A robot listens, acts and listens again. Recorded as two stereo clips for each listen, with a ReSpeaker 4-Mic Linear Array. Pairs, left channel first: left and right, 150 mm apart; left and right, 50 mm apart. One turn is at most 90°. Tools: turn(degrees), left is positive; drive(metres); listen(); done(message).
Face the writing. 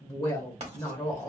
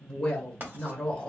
turn(degrees=-45)
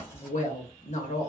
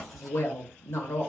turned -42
listen()
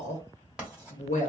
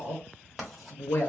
turn(degrees=-10)
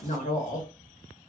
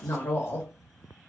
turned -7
listen()
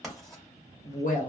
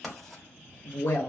done("Found it: writing, straight ahead, 1 to 2 m away.")